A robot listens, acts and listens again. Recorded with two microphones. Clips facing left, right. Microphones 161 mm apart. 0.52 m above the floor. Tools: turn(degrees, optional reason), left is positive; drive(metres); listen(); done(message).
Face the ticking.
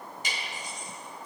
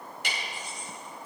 turn(degrees=-70, reason="The ticking: about 70° right or 110° right.")
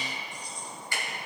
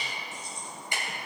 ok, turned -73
turn(degrees=-20, reason="So it is at 20° right.")
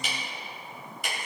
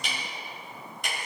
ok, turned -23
done("Found it: ticking, straight ahead, 2 to 4 m away.")